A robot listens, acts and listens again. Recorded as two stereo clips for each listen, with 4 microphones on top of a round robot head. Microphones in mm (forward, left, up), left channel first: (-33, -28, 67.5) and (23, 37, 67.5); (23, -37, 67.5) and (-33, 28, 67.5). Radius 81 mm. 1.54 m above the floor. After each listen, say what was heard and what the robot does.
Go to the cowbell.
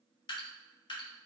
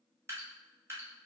Keep listening.
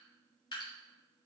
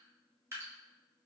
Keep listening.
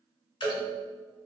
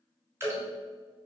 The cowbell: 30° left. Turn 30° left.
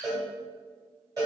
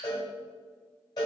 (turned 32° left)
Drive 1.0 m forward.
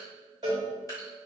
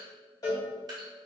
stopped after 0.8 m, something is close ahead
I am next to the cowbell.